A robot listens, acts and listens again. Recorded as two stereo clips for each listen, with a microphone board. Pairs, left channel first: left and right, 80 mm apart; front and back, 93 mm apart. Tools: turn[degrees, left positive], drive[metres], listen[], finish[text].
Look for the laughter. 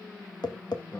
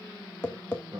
Thought: The laughter: 140° left.
Action: turn[140]
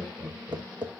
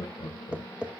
Thought: The laughter is now 30° right.
Action: turn[-30]
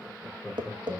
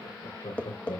Action: finish[Found it: laughter, straight ahead.]